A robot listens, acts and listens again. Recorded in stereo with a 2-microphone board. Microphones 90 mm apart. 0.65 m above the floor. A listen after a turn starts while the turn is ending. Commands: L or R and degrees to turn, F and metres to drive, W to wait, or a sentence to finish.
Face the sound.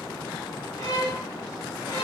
L45
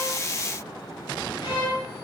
L80
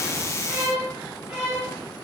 R10
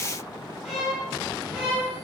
Facing the violin, 1 to 2 m away.